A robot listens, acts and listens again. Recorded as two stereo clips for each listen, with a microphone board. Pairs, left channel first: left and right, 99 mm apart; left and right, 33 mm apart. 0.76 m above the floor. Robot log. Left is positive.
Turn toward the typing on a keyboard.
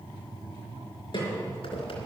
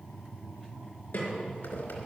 cmd idle
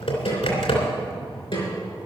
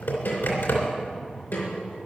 cmd yaw +90
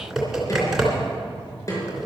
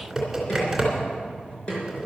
end: Facing the typing on a keyboard.